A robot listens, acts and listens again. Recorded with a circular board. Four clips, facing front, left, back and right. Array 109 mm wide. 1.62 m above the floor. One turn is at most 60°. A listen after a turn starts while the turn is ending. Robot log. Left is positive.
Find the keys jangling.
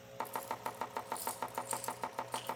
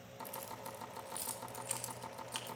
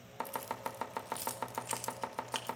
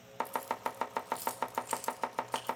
note: The keys jangling: 175° left.
cmd yaw +60
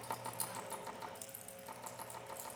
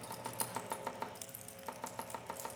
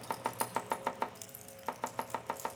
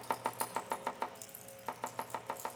note: The keys jangling is now 130° left.
cmd yaw +60
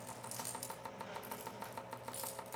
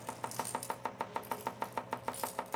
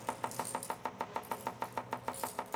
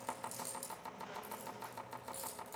note: The keys jangling is now 65° left.
cmd yaw +60
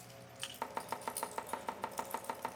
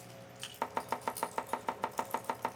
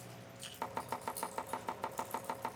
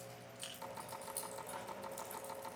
note: The keys jangling is now 25° left.
cmd yaw +25
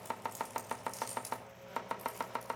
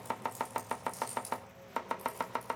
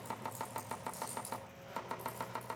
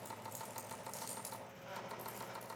note: The keys jangling is now 10° left.
cmd yaw +10
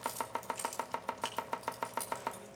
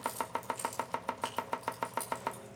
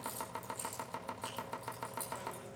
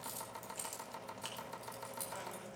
end: Found it: keys jangling, straight ahead.